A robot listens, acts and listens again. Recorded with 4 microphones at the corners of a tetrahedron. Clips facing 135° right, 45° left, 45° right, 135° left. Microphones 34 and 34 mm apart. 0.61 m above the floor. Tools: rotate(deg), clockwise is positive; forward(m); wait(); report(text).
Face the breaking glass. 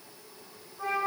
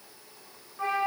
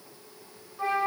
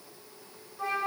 wait()
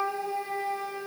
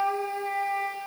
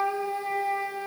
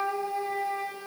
wait()
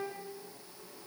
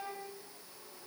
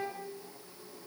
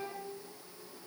report("I can't make out breaking glass, only a flute.")